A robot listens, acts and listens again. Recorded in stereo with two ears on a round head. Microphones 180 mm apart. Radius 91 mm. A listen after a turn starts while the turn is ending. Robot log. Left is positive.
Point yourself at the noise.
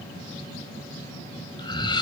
note: The laughter: about 25° left or 155° left.
cmd yaw +25
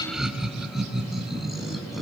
end: Found it: laughter, straight ahead, over 4 m away.